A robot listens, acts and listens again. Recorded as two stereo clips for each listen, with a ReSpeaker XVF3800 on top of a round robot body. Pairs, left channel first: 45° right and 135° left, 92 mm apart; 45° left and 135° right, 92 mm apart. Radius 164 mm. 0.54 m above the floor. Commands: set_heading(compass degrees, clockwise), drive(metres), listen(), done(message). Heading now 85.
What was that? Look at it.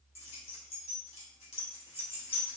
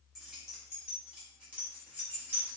set_heading(150)
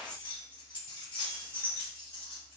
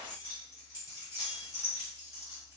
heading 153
set_heading(168)
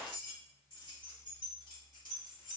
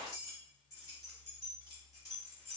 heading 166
set_heading(176)
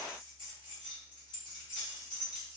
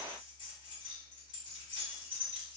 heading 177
done("Found it: keys jangling, straight ahead, 2 to 4 m away.")